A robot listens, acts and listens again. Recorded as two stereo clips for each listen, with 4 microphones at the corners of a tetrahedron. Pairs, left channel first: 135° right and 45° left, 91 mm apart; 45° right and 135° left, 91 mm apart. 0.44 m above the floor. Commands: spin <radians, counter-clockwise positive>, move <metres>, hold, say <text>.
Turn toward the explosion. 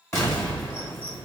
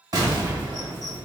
spin 2.97
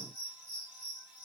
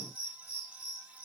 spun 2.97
say I heard an explosion from this way, but can't make it out now.